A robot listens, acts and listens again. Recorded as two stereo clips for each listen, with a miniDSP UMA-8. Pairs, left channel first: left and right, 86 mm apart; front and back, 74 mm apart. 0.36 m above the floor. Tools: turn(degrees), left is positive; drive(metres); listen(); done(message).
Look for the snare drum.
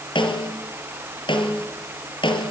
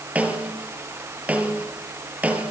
turn(degrees=110)
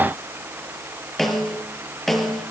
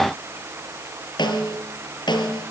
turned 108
done("Facing the snare drum.")